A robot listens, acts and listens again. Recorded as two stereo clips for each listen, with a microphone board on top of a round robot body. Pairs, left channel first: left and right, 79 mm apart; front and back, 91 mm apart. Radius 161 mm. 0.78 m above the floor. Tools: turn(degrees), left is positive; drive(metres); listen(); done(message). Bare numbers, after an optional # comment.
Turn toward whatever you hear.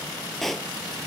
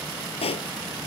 done("Facing the pop.")